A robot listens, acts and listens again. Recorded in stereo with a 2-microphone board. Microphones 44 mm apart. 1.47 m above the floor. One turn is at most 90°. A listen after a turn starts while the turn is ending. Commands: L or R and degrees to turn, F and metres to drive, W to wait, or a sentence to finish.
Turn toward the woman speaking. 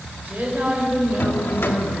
R40
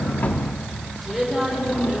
Found it: a woman speaking, straight ahead, over 4 m away.